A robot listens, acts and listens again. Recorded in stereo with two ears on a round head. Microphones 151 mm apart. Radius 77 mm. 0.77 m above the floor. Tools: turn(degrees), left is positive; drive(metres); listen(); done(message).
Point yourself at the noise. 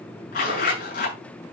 turn(degrees=50)
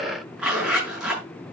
done("Found it: a zipper, straight ahead, over 4 m away.")